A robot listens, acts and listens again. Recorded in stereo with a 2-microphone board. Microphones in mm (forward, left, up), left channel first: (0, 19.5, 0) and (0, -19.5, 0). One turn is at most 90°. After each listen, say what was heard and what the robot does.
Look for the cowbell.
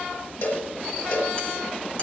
The cowbell: about 65° left or 115° left. Turn 65° left.
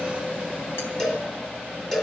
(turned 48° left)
So it is at 15° left. Turn 15° left.
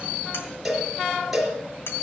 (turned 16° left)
Facing the cowbell, 2 to 4 m away.